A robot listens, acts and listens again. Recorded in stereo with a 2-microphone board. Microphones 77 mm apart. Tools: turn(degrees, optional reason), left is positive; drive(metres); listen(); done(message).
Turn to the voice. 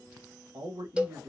turn(degrees=-65, reason="The man speaking: about 65° right or 115° right.")
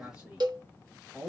turn(degrees=-15, reason="So it is at 15° right.")
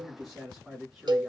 done("Facing the man speaking.")